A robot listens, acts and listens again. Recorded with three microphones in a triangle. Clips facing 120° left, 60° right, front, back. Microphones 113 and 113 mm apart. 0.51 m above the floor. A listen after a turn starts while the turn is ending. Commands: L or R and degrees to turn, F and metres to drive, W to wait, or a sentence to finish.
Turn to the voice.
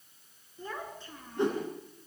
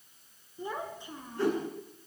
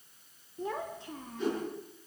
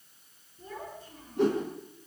L15
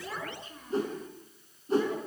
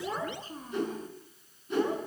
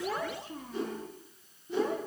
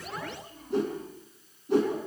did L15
Found it: a child speaking, straight ahead, 2 to 4 m away.